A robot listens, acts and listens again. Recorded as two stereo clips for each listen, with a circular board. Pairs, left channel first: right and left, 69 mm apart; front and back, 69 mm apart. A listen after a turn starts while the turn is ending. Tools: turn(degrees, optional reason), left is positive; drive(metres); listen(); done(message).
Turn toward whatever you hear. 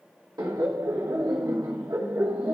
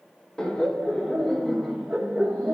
turn(degrees=105, reason="The laughter: 105° left.")
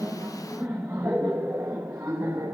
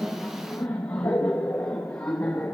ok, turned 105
turn(degrees=50, reason="The laughter is now 50° left.")
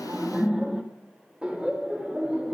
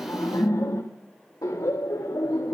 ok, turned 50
turn(degrees=15, reason="The laughter is now 15° left.")
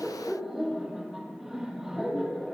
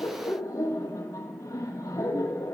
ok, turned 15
done("Found it: laughter, straight ahead, 2 to 4 m away.")